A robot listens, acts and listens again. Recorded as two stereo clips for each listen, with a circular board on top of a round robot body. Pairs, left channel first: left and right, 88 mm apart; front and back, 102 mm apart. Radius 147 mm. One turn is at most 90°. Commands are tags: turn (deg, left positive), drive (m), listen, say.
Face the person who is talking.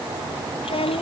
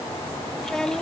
<turn deg="85"/>
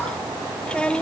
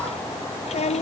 <turn deg="10"/>
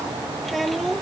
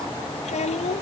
<say>Facing the child speaking.</say>